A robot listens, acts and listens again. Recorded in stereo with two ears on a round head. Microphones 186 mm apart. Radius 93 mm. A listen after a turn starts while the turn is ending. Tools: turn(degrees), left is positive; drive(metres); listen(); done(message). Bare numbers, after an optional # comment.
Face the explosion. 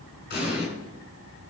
# The explosion: about 50° left or 130° left.
turn(50)
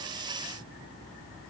listen()
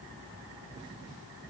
done("I heard an explosion, but can't make it out now. It was about straight ahead or 80° left.")